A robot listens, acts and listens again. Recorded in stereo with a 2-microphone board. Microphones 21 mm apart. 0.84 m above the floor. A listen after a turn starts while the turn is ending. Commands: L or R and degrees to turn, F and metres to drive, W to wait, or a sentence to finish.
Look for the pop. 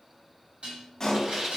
L25
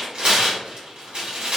W
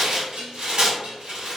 I heard a pop, but can't make it out now. It was about straight ahead or 130° left.